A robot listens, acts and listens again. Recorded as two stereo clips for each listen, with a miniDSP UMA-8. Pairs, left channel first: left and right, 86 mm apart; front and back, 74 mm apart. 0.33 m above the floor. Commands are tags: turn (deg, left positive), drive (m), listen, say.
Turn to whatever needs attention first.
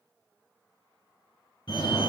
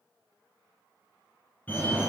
<turn deg="65"/>
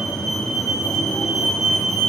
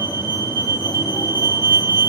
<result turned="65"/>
<say>Facing the fire alarm.</say>